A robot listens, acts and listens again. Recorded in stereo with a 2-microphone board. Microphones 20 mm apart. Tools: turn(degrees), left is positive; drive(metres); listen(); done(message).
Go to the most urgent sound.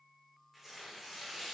listen()
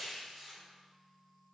listen()
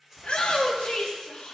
turn(degrees=70)
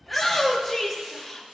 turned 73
drive(metres=1.0)
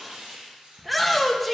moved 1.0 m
drive(metres=1.0)
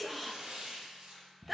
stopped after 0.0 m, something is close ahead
done("I am next to the shout.")